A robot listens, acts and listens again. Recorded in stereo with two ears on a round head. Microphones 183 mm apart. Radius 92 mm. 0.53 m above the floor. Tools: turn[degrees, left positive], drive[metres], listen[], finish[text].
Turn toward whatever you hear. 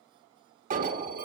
Thought: The alarm: about 40° right or 140° right.
Action: turn[-40]
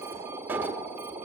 Thought: So it is at 10° right.
Action: turn[-10]
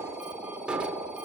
Action: finish[Found it: an alarm, straight ahead.]